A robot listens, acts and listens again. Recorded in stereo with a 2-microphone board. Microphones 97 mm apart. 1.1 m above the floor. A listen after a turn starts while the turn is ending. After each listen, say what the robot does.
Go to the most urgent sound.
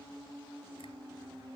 Keep listening.
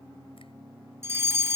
Turn 30° right.
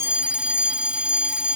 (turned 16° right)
Turn 10° right.
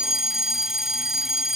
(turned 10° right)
Drive 1.0 m forward.
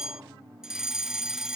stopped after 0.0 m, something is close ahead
Something is in my way. I am facing the fire alarm but have not reached it.